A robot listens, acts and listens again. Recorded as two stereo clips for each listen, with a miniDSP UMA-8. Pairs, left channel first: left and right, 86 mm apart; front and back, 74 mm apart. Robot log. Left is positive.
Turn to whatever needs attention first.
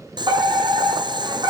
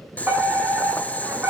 note: The fire alarm: 120° right.
cmd yaw -120
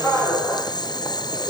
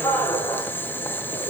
note: The fire alarm is now 10° left.
cmd yaw +10
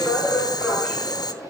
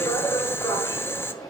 end: Facing the fire alarm, over 4 m away.